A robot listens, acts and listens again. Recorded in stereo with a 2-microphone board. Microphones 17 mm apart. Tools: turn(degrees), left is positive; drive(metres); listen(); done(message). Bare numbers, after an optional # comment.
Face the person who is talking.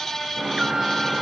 listen()
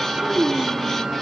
# The child speaking: about 30° right or 150° right.
turn(-30)
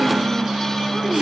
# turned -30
listen()
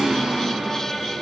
listen()
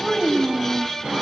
# So it is at 35° left.
turn(35)
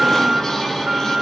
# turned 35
listen()
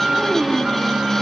# The child speaking is now 30° left.
turn(30)
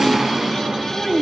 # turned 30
# The child speaking is now 10° right.
turn(-10)
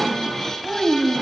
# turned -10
done("Facing the child speaking, 2 to 4 m away.")